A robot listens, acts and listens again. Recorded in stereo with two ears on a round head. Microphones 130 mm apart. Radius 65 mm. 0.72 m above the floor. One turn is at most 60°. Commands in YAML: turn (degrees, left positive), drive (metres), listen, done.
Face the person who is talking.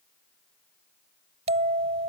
listen: true
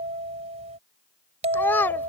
turn: 30
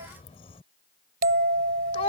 turn: 60
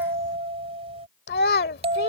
turn: 60
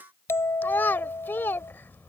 turn: 15
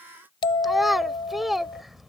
done: "Facing the child speaking."